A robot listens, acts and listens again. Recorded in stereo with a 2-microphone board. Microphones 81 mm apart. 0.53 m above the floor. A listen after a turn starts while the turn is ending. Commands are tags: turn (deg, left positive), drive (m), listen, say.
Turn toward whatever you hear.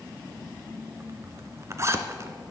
<turn deg="-35"/>
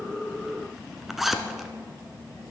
<say>Facing the zipper, 1 to 2 m away.</say>